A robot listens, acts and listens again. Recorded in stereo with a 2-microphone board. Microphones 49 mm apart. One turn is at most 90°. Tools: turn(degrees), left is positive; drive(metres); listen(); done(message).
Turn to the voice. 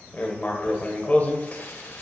listen()
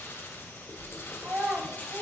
turn(degrees=-30)
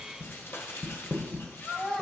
done("Found it: a child speaking, straight ahead.")